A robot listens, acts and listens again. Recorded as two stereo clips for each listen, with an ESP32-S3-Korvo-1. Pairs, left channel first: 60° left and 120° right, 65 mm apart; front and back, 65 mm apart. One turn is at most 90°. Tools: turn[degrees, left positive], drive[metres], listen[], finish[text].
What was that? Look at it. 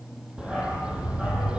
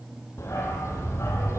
Thought: The dog barking: 45° right.
Action: turn[-45]
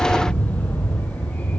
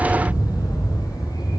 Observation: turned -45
Thought: The dog barking is now 10° right.
Action: turn[-10]
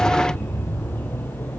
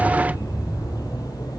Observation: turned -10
Action: finish[Facing the dog barking.]